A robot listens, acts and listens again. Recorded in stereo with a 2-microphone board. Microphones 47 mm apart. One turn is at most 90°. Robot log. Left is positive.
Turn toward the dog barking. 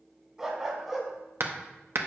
cmd yaw -30
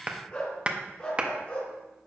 note: So it is at 30° left.
cmd yaw +30
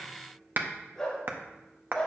note: The dog barking is now 15° left.
cmd yaw +15
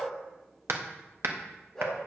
end: Found it: a dog barking, straight ahead, 2 to 4 m away.